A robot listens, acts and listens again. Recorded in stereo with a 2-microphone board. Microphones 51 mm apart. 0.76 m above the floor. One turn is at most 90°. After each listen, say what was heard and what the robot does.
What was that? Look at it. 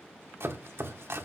The chopping: about 55° right or 125° right. Turn 55° right.
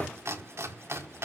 So it is at 70° right. Turn 70° right.
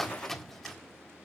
Found it: chopping, straight ahead.